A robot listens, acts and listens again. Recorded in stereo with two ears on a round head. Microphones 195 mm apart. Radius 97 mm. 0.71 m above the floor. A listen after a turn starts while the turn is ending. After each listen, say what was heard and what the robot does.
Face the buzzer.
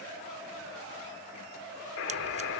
The buzzer: about 65° left or 115° left. Turn 65° left.
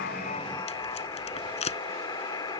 So it is at 20° left. Turn 20° left.
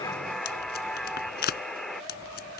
Facing the buzzer.